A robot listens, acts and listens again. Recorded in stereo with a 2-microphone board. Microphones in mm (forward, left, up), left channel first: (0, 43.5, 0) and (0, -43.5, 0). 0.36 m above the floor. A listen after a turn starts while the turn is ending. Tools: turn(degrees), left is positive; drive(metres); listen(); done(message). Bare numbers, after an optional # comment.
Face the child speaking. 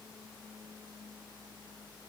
listen()
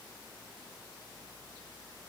listen()
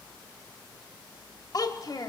# The child speaking: about 55° left or 125° left.
turn(55)
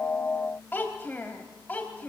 # So it is at 20° left.
turn(20)
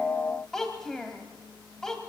done("Facing the child speaking, 1 to 2 m away.")